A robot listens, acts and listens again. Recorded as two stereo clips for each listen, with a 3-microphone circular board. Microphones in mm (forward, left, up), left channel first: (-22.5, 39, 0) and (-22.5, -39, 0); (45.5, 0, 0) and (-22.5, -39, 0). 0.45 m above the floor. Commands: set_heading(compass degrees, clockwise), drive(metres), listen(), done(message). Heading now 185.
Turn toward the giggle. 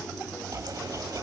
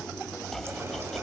listen()
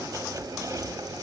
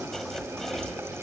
listen()
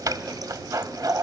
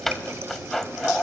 done("I can't make out a giggle, only chopping.")